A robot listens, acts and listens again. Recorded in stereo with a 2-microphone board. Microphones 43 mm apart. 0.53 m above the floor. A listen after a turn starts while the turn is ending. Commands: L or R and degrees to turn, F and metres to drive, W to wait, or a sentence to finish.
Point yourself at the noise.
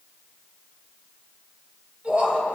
R35
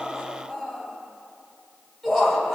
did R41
Found it: laughter, straight ahead.